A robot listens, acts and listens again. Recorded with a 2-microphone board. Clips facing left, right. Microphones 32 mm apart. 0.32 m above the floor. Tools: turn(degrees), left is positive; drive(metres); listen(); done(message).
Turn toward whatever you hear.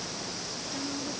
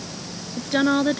turn(degrees=-70)
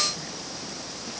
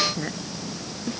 listen()
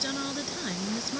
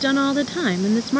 turn(degrees=-45)
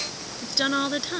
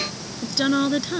done("Facing the woman speaking.")